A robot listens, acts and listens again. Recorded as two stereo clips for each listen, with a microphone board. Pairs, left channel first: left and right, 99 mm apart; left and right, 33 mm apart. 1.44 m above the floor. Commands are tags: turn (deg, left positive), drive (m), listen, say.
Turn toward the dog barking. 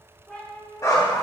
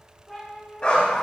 <turn deg="40"/>
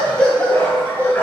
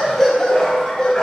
<turn deg="20"/>
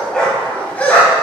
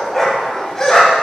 <turn deg="15"/>
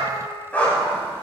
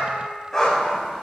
<turn deg="15"/>
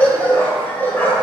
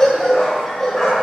<turn deg="20"/>
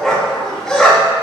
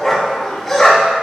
<say>Found it: a dog barking, straight ahead.</say>